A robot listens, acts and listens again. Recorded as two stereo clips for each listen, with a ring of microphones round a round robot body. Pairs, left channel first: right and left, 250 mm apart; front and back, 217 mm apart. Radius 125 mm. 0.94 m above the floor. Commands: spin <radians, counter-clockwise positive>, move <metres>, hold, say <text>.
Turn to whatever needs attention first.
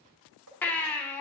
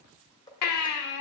say Facing the baby crying, 1 to 2 m away.